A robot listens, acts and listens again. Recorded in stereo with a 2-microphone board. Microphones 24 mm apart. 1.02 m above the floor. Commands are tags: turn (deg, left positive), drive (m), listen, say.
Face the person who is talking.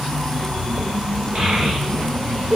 <turn deg="-40"/>
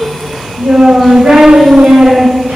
<turn deg="-100"/>
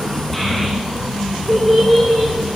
<say>Found it: a child speaking, straight ahead.</say>